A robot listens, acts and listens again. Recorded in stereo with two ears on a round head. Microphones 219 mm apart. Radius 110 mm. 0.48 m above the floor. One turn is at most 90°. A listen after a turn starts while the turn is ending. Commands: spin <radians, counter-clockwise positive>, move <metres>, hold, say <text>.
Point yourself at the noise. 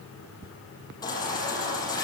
spin 0.26
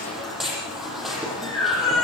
say Found it: a baby crying, straight ahead.